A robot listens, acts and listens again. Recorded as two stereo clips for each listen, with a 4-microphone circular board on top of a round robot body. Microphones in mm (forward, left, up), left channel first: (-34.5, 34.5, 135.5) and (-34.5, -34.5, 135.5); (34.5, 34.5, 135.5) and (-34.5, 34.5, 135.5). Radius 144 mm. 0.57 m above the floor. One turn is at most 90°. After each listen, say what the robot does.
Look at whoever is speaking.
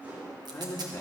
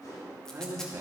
Turn 90° left.
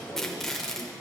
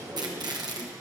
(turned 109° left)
Turn 25° left.
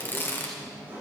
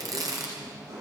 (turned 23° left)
Keep listening.
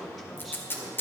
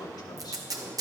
Found it: a man speaking, straight ahead.